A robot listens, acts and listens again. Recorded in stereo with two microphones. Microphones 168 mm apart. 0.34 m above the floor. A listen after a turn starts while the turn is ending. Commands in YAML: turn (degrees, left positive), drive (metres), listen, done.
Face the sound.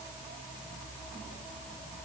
listen: true
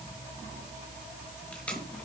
turn: 30
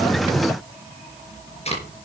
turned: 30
turn: 140
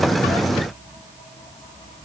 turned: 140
listen: true
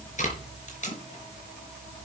turn: 50
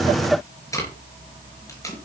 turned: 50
turn: 20
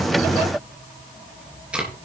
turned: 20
done: "Facing the tape being pulled."